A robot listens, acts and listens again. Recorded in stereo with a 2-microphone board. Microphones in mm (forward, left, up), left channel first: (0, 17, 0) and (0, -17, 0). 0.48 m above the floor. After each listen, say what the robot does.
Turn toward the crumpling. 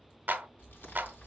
Turn 75° left.
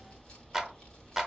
Turn 20° left.
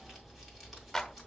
Facing the crumpling.